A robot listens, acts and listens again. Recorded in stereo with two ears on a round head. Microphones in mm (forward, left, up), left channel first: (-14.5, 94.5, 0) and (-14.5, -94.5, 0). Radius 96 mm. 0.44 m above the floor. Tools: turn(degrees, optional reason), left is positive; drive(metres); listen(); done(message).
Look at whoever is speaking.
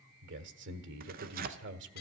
turn(degrees=-60, reason="The man speaking: about 60° right or 120° right.")
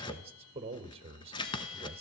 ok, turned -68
turn(degrees=-30, reason="So it is at 30° right.")
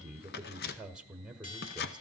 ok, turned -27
done("Facing the man speaking, 1 to 2 m away.")